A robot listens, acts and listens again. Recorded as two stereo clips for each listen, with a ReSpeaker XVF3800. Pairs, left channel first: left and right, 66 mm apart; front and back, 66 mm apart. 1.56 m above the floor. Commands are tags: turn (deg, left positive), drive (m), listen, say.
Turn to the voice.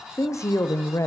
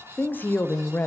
<turn deg="55"/>
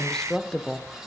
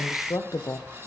<turn deg="10"/>
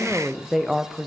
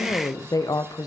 <say>Found it: a woman speaking, straight ahead.</say>